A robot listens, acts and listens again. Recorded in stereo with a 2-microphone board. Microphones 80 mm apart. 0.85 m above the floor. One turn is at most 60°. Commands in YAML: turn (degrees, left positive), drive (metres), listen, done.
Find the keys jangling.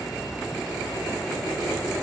listen: true
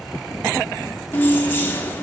turn: 25
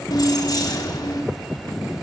turn: 60
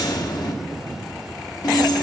turn: 60
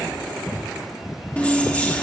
turn: 15
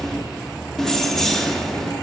done: "Found it: keys jangling, straight ahead, 1 to 2 m away."